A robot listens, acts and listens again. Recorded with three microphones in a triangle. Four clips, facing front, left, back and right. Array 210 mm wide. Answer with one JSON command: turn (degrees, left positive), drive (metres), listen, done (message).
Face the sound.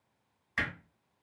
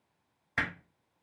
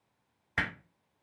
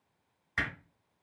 {"turn": 150}
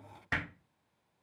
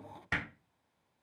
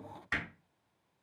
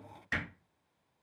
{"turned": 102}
{"turn": 45}
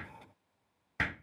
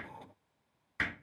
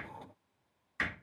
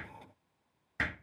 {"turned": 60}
{"turn": -15}
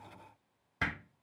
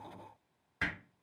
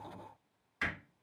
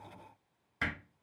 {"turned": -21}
{"done": "Found it: hammering, straight ahead, 1 to 2 m away."}